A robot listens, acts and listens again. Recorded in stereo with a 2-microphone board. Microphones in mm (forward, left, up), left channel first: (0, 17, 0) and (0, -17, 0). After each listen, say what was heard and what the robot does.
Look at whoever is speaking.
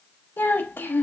Turn 90° left.
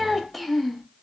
Facing the child speaking, under 1 m away.